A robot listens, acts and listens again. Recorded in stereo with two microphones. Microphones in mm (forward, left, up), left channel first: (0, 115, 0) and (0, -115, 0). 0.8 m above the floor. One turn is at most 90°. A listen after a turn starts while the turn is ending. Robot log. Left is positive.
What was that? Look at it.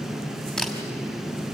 cmd yaw +30
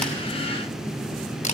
note: So it is at 145° left.
cmd yaw +90
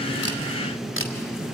note: The camera shutter is now 65° left.
cmd yaw +65
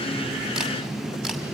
cmd idle
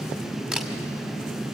end: Facing the camera shutter.